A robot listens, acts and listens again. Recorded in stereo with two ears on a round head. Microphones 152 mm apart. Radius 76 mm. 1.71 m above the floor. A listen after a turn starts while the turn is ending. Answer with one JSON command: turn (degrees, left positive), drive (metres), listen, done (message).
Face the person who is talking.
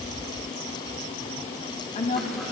{"turn": 45}
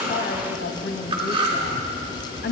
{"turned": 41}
{"turn": 95}
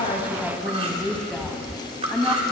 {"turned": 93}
{"done": "Facing the woman speaking."}